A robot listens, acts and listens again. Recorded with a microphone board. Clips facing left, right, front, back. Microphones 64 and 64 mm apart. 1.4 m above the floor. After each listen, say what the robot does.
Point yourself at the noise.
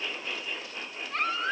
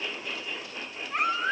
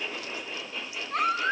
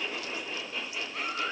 Turn 15° right.
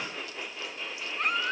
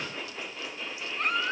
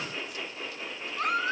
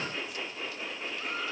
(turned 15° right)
Facing the baby crying.